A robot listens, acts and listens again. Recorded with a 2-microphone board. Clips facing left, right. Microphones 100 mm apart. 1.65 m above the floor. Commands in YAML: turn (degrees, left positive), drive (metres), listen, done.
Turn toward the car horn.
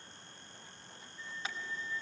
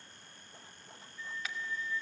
turn: 30
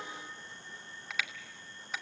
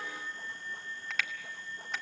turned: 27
done: "Found it: a car horn, straight ahead, 2 to 4 m away."